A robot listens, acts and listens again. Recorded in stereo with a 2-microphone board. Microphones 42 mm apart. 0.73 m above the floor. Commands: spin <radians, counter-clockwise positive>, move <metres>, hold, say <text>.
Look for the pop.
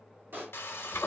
spin -0.96
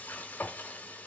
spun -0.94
hold
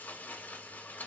say I heard a pop, but can't make it out now. It was about straight ahead or 70° right.